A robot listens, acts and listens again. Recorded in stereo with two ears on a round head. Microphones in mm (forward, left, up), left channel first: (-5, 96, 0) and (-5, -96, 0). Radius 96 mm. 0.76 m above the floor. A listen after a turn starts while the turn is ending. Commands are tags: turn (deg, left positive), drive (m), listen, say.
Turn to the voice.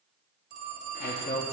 <turn deg="30"/>
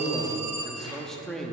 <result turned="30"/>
<say>Facing the man speaking, under 1 m away.</say>